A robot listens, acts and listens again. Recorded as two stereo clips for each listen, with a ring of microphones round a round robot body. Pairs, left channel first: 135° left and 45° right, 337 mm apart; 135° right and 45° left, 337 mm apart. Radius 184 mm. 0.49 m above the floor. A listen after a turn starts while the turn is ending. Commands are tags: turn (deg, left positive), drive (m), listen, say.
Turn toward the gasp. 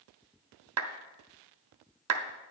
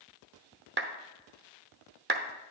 <listen/>
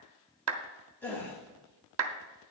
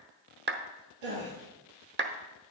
<turn deg="50"/>
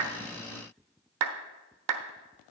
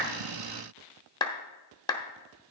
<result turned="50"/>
<say>I heard a gasp from this way, but can't make it out now.</say>